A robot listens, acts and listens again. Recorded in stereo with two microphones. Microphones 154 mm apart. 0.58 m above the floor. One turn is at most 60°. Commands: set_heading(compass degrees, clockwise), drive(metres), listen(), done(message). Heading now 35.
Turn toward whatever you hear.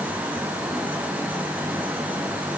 listen()
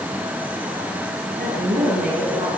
set_heading(95)
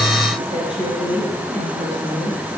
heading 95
set_heading(135)
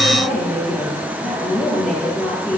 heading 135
done("Found it: a woman speaking, straight ahead, over 4 m away.")